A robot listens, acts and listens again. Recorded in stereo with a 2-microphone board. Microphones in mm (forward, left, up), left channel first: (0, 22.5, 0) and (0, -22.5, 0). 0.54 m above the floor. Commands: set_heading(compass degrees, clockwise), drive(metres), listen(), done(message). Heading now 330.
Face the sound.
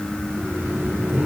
set_heading(20)
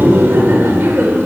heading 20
set_heading(95)
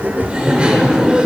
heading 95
set_heading(120)
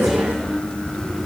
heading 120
listen()
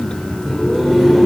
done("Facing the laughter, 1 to 2 m away.")